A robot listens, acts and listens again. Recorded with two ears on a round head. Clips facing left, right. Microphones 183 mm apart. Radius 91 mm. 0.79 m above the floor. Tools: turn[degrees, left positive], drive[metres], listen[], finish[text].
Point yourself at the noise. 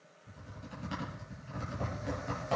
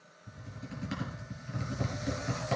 Thought: The typing on a keyboard: about 25° right or 155° right.
Action: turn[-25]
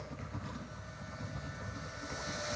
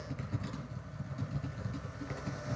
Thought: So it is at 125° right.
Action: turn[-125]
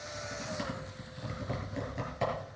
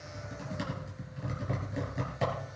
Action: finish[Found it: typing on a keyboard, straight ahead.]